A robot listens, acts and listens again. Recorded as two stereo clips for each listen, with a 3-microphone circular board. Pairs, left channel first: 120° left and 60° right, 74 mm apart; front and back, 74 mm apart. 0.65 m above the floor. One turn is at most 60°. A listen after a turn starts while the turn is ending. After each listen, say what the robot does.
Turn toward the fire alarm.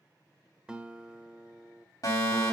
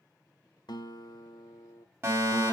Turn 60° left.
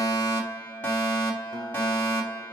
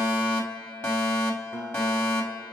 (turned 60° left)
Turn 55° left.
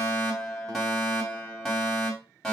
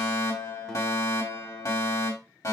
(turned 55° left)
Turn 30° left.
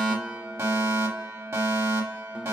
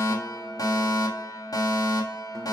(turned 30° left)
Turn 25° right.
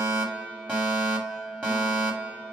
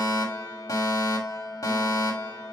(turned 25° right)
Turn 10° left.
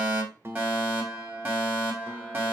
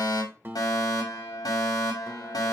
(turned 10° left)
Facing the fire alarm.